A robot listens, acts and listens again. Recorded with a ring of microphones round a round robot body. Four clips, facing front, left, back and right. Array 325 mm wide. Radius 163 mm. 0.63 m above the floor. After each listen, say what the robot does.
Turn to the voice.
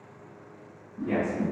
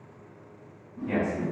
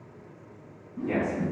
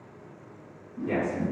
Turn 110° right.
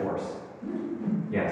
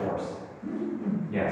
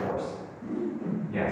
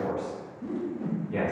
Turn 35° right.
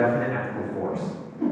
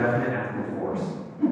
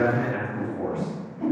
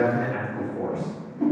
Turn 20° right.
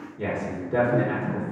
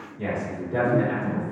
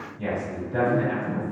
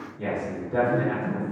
Facing the man speaking, 1 to 2 m away.